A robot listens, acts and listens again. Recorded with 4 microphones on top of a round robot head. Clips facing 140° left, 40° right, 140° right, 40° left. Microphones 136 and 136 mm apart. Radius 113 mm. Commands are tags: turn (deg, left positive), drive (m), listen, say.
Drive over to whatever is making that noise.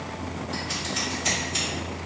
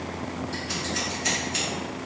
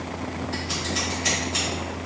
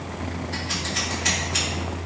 <turn deg="-70"/>
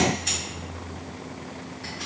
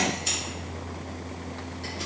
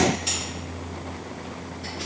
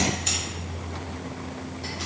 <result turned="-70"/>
<drive m="1.0"/>
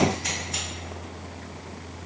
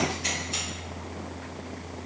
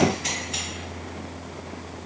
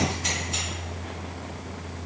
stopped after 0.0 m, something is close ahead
<listen/>
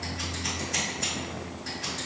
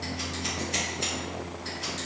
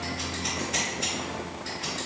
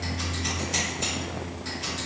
<turn deg="-10"/>
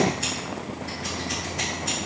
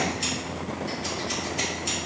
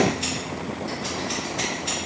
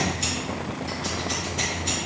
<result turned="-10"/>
<say>Blocked. The scissors is further on, straight ahead.</say>